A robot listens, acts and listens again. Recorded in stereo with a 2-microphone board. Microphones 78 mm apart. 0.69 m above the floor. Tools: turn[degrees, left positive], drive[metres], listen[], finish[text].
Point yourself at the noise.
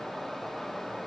Action: listen[]
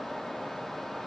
Action: listen[]
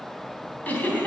Thought: The giggle: about 20° left or 160° left.
Action: turn[20]
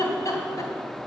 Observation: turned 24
Thought: So it is at 135° left.
Action: turn[135]
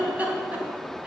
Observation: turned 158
Thought: The giggle is now 20° right.
Action: turn[-20]
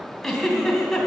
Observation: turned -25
Action: finish[Facing the giggle.]